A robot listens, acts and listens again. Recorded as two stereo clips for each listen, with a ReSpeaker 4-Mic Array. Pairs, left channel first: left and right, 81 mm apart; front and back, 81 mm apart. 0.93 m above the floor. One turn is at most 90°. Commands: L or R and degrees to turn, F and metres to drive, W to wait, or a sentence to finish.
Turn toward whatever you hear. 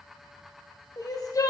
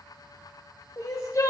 L45
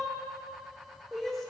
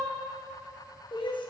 Facing the crying, under 1 m away.